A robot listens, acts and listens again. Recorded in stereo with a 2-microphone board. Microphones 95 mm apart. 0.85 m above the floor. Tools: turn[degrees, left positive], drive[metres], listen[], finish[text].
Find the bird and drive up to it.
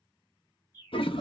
Thought: The bird: about 40° left or 140° left.
Action: turn[40]
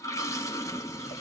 Action: listen[]
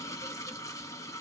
Action: listen[]
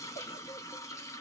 Action: finish[I heard a bird, but can't make it out now. It was about straight ahead or 100° left. I did not reach it.]